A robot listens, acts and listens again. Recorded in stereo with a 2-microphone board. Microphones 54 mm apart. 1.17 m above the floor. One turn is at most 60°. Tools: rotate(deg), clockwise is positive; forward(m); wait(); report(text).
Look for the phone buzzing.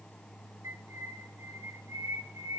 wait()
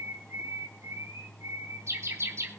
wait()
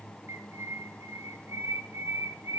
report("I can't make out a phone buzzing to turn to.")